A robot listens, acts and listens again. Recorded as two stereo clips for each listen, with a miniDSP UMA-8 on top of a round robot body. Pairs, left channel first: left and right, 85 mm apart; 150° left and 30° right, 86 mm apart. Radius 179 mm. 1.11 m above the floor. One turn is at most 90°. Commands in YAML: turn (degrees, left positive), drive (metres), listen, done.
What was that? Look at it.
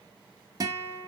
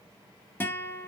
turn: -90
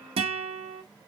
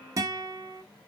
turn: -85
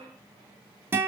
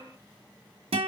turn: -25
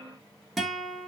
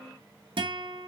done: "Found it: a guitar, straight ahead, under 1 m away."